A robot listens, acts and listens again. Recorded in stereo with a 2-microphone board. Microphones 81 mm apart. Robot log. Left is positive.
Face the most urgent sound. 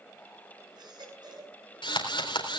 note: The baby crying: about 60° right or 120° right.
cmd yaw -60
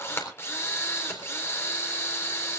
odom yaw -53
cmd idle
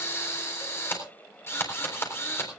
cmd idle
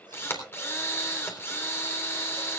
end: I heard a baby crying, but can't make it out now. It was about 10° right or 65° right.